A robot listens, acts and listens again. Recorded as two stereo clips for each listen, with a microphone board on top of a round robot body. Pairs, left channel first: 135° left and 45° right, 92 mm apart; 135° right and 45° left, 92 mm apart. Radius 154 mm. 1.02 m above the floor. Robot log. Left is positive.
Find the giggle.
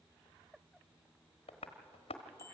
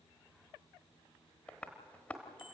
cmd idle
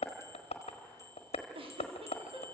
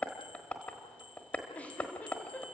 note: The giggle: 60° right.
cmd yaw -60
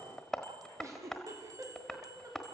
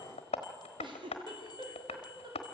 note: The giggle is now 15° left.
cmd yaw +15
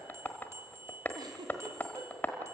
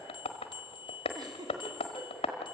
end: Found it: a giggle, straight ahead.